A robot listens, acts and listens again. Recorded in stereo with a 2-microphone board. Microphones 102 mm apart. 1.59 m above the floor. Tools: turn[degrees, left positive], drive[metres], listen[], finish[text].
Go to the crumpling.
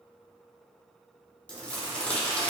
Action: turn[30]
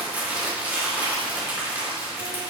Thought: So it is at 20° right.
Action: turn[-20]
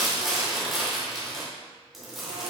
Action: drive[1.0]
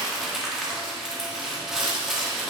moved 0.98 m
Action: drive[1.0]
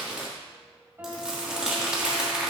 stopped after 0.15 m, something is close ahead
Thought: The crumpling is now 10° right.
Action: turn[-10]
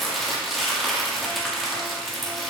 Action: finish[Arrived at the crumpling, straight ahead.]